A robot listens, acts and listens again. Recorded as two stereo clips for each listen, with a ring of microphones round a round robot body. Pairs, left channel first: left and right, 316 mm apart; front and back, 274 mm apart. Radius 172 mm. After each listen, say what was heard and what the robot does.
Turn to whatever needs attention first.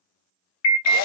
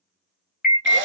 The alarm: 55° left. Turn 55° left.
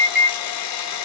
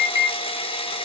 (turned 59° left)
Facing the alarm, under 1 m away.